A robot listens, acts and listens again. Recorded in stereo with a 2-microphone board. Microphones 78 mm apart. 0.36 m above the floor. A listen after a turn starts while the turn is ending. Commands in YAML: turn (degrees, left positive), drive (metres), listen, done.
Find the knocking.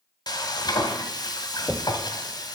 turn: 30
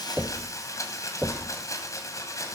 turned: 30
turn: -25
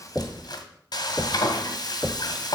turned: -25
turn: 10
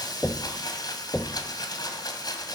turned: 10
done: "Facing the knocking, under 1 m away."